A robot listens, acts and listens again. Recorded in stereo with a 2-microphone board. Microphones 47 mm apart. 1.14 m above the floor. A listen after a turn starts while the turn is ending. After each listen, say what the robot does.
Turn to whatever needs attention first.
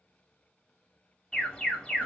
Turn 20° left.
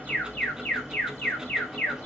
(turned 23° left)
Turn 135° left.
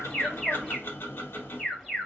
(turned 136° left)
Found it: an alarm, straight ahead, 1 to 2 m away.